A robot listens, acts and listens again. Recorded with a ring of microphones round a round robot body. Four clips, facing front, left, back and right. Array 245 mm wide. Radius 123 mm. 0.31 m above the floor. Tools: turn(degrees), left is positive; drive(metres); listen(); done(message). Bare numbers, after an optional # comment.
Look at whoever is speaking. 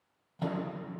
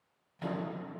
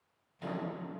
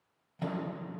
listen()
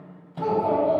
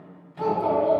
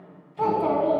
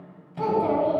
# The child speaking: 170° right.
turn(-170)
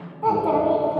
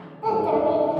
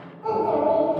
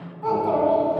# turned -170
# The child speaking is now 10° left.
turn(10)
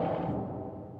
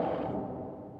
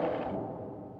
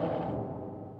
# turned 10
done("Facing the child speaking, 2 to 4 m away.")